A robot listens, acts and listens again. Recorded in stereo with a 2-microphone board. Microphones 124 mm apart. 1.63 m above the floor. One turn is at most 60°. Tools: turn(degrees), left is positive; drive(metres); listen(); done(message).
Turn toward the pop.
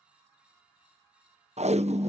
turn(degrees=-50)
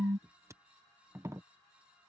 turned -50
turn(degrees=-60)
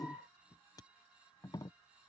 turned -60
turn(degrees=-20)
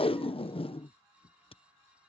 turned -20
done("Facing where the pop came from. I can't hear it now.")